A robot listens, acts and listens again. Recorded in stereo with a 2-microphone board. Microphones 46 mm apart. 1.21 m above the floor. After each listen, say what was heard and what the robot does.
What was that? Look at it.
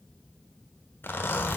The zipper: about 50° left or 130° left. Turn 50° left.
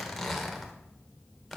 Facing the zipper, 1 to 2 m away.